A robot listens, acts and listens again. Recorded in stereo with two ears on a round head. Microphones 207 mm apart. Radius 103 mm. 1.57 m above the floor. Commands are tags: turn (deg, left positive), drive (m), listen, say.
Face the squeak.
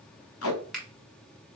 <listen/>
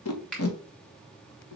<listen/>
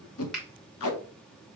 <say>I can't make out a squeak to turn to.</say>